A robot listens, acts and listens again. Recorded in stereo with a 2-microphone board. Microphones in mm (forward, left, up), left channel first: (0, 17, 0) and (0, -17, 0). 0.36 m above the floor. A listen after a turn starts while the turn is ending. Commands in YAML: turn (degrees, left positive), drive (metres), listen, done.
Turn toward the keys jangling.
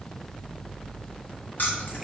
turn: 65
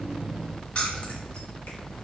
turn: 40
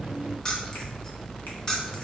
turn: 25
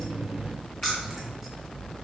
done: "Found it: keys jangling, straight ahead."